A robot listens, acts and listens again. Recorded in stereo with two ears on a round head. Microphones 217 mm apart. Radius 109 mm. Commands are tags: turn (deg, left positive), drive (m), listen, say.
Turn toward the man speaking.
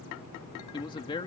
<turn deg="20"/>
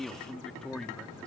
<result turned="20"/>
<turn deg="30"/>
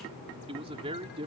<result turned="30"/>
<turn deg="-25"/>
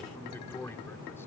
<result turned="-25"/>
<turn deg="10"/>
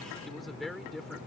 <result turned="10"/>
<say>Found it: a man speaking, straight ahead.</say>